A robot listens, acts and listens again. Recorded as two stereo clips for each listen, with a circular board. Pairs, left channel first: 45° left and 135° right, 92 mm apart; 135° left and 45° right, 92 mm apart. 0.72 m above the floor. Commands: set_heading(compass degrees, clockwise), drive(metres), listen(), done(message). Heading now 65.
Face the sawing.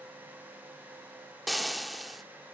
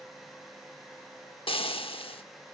listen()
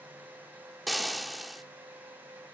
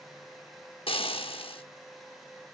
listen()
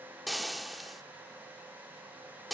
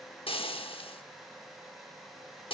done("I can't make out sawing, only frying.")